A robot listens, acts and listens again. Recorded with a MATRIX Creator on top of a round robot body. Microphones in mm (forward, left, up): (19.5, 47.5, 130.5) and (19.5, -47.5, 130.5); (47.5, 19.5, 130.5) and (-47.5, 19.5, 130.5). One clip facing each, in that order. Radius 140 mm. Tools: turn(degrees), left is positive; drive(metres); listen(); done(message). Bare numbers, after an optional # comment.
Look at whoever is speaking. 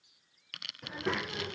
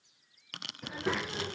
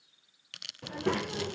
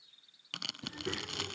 done("Facing the child speaking.")